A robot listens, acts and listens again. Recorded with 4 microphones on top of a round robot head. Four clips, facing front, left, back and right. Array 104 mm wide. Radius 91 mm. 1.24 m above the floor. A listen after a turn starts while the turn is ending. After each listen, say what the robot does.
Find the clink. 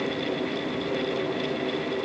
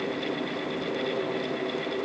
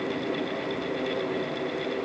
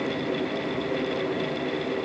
Keep listening.
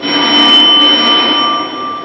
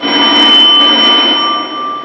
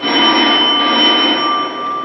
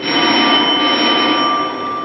Keep listening.
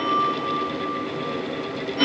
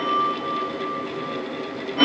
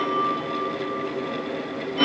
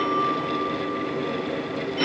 I can't make out a clink, only a phone ringing.